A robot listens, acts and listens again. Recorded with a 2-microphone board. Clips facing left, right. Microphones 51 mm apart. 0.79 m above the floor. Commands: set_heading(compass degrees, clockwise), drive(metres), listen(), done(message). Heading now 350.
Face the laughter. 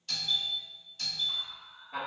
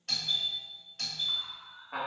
set_heading(40)
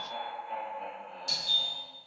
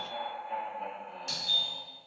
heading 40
done("Facing the laughter, 2 to 4 m away.")